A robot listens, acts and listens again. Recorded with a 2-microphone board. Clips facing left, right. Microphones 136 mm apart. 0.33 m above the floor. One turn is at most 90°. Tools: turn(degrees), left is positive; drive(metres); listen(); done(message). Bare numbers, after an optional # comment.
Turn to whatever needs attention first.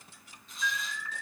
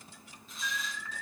# The alarm: about 65° left or 115° left.
turn(65)
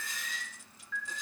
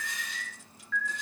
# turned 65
# So it is at 20° left.
turn(20)
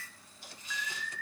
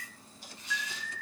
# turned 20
done("Found it: an alarm, straight ahead.")